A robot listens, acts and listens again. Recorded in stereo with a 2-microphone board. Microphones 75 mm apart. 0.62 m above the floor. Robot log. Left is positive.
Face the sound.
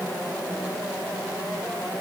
cmd idle
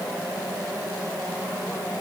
cmd idle
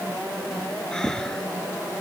cmd yaw +30
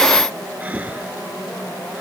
note: So it is at 20° right.
cmd yaw -20
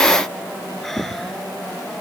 end: Found it: breathing, straight ahead.